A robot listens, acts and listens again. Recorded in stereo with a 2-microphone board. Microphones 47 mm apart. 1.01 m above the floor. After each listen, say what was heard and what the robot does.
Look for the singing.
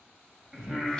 Turn 30° right.
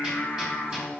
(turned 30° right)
So it is at 20° left. Turn 20° left.
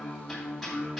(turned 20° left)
The singing is now 10° left. Turn 10° left.
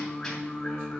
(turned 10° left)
The singing is now 10° left. Turn 10° left.
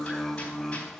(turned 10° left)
Facing the singing.